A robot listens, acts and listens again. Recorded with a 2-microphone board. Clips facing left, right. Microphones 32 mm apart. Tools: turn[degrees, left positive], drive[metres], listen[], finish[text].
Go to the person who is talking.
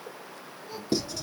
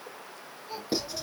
Thought: The child speaking: about 20° right or 160° right.
Action: turn[-20]
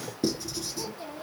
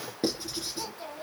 Action: drive[1.0]
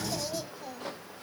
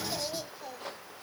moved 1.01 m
Action: drive[1.0]
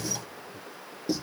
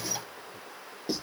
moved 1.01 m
Action: listen[]
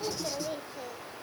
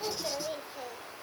Thought: The child speaking is now 10° right.
Action: turn[-10]
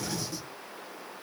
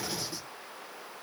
Action: listen[]
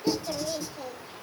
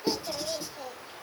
Action: drive[1.0]
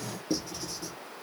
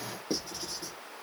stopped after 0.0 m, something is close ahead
Action: listen[]
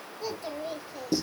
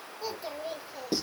Action: finish[Arrived at the child speaking, straight ahead.]